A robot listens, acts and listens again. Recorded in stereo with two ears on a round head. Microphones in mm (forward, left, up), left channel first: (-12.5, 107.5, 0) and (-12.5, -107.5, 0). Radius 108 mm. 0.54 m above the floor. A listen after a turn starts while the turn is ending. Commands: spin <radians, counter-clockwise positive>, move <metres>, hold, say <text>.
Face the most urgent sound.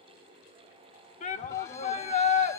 spin 0.52
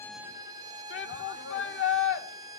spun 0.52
spin 2.01
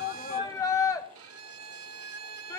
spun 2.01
spin 0.26
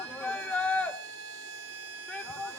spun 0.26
say Facing the shout, 1 to 2 m away.